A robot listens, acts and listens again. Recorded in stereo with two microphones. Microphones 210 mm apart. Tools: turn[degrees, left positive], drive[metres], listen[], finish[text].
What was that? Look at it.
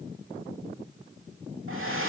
Action: turn[-90]
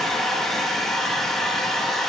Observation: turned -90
Action: finish[Facing the hair dryer.]